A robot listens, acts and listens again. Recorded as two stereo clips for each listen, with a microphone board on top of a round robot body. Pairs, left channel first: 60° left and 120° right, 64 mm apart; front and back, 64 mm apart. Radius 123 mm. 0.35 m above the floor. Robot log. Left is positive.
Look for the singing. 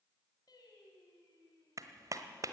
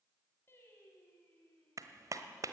note: The singing: 65° left.
cmd yaw +65
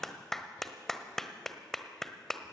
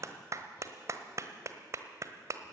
cmd idle
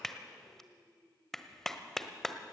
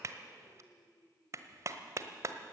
note: The singing is now 45° left.
cmd yaw +45
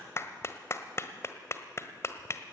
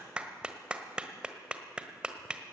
cmd idle
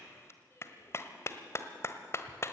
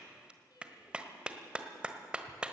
note: The singing is now 10° left.
cmd yaw +10
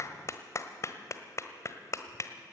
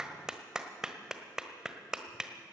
cmd idle
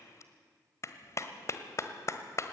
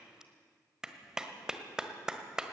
cmd idle
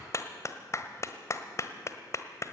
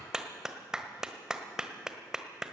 end: Facing where the singing came from. I can't hear it now.